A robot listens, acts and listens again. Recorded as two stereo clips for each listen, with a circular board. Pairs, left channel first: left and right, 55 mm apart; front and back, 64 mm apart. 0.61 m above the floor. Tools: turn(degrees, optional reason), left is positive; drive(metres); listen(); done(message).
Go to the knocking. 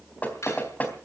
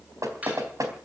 turn(degrees=150, reason="The knocking: 150° left.")
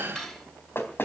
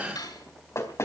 turn(degrees=45, reason="The knocking is now 45° left.")
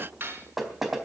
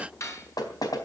drive(metres=1.0)
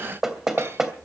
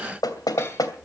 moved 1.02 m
drive(metres=1.0)
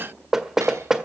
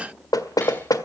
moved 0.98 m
turn(degrees=-10, reason="The knocking is now 10° right.")
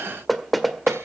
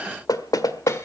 drive(metres=1.0)
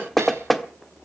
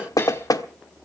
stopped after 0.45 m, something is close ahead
done("I am next to the knocking.")